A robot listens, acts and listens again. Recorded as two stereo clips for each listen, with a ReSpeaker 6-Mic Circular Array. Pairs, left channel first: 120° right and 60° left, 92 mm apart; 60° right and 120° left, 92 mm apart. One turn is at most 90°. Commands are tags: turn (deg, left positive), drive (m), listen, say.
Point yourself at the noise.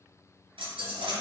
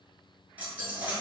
<turn deg="45"/>
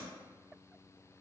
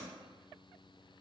<say>Facing where the dropped coin came from. I can't hear it now.</say>